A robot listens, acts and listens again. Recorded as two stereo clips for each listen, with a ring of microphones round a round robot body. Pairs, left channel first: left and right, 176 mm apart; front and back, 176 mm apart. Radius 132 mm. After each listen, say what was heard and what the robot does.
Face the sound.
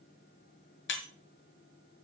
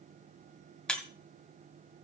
The breaking glass: 85° left. Turn 85° left.
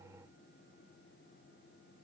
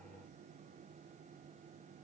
Facing where the breaking glass came from. I can't hear it now.